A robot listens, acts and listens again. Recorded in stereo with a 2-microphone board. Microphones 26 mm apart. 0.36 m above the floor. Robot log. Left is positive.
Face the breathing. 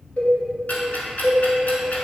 cmd idle
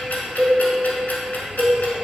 cmd idle
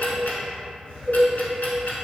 end: I can't make out breathing to turn to.